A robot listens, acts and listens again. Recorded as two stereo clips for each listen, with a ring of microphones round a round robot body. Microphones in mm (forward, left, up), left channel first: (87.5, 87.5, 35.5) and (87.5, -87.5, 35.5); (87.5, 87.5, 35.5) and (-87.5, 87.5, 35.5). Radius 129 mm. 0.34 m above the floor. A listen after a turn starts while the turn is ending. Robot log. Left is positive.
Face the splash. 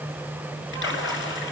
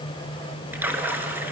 note: The splash: 100° left.
cmd yaw +100
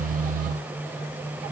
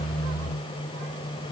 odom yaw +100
end: I heard a splash from this way, but can't make it out now.